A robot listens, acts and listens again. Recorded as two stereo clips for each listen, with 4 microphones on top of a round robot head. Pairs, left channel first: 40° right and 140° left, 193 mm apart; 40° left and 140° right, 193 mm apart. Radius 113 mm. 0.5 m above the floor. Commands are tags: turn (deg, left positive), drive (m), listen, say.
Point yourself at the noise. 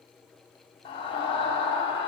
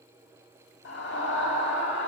<turn deg="20"/>
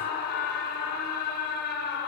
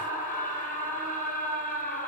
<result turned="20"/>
<say>Found it: a scream, straight ahead, over 4 m away.</say>